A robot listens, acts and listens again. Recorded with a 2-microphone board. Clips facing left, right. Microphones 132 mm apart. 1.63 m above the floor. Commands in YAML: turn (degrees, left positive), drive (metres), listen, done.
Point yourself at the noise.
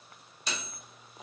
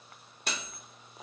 turn: -55
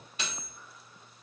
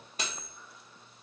turn: -50
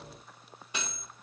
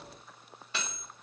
turn: 20
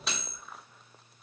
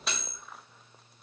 done: "Facing the cutlery clinking."